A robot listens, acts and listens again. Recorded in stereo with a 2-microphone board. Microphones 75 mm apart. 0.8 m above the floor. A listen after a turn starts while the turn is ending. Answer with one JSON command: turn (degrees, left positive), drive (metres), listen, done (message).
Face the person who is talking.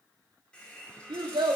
{"turn": -70}
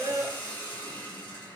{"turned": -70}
{"listen": true}
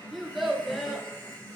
{"done": "Facing the child speaking."}